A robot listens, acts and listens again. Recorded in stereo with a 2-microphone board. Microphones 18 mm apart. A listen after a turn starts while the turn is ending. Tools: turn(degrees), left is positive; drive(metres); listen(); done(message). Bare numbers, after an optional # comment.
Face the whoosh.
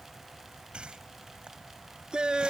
# The whoosh: about 65° right or 115° right.
turn(-65)
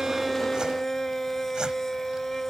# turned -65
listen()
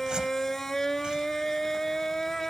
listen()
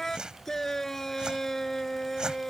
# So it is at 45° right.
turn(-45)
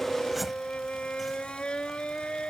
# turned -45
listen()
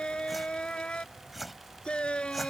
done("Found it: a whoosh, straight ahead.")